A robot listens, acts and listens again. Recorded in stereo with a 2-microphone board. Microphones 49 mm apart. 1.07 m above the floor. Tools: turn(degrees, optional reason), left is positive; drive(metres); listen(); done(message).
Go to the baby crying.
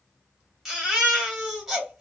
turn(degrees=-30)
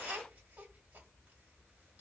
listen()
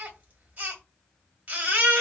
turn(degrees=-145, reason="So it is at 145° right.")
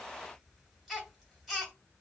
drive(metres=1.0)
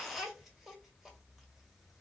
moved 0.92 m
listen()
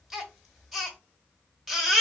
drive(metres=1.0)
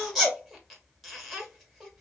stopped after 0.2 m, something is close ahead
done("Arrived at the baby crying, straight ahead.")